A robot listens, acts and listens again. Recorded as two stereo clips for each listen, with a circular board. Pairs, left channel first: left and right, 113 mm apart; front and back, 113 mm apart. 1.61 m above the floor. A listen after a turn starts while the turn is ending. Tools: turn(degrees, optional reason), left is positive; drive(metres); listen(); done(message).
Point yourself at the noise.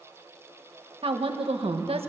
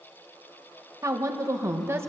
turn(degrees=-115, reason="The woman speaking: 115° right.")
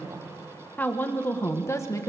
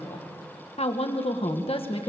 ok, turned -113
turn(degrees=30, reason="The woman speaking is now 30° left.")
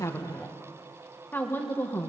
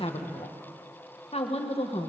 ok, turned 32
turn(degrees=25, reason="The woman speaking is now 25° left.")
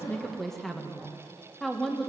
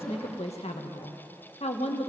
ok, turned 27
done("Found it: a woman speaking, straight ahead, 1 to 2 m away.")